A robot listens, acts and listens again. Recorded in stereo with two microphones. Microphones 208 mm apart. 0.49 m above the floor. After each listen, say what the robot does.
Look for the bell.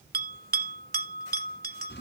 Turn 50° right.
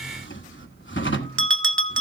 Turn 80° right.
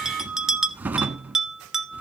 Facing the bell, 1 to 2 m away.